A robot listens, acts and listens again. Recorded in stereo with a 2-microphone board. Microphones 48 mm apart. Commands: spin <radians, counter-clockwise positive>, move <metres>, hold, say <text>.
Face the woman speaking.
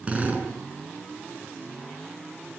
hold
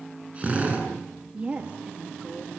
spin -0.52
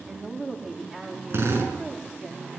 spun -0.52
say Found it: a woman speaking, straight ahead.